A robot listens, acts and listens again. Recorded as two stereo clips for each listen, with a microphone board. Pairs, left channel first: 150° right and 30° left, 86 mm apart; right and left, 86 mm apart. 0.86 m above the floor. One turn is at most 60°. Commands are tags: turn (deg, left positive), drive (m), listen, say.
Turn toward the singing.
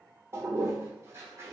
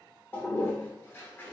<listen/>
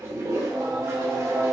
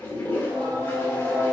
<turn deg="55"/>
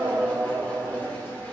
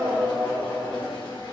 <turn deg="-30"/>
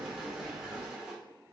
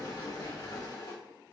<turn deg="-15"/>
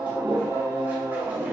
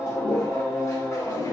<turn deg="-20"/>
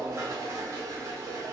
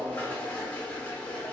<say>Found it: singing, straight ahead, 1 to 2 m away.</say>